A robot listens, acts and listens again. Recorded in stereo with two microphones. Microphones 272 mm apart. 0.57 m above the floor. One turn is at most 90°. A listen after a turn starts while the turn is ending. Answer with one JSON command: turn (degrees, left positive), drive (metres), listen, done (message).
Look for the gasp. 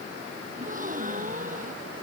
{"turn": -30}
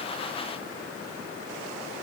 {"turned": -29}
{"listen": true}
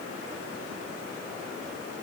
{"done": "I heard a gasp, but can't make it out now. It was about straight ahead or 120° right."}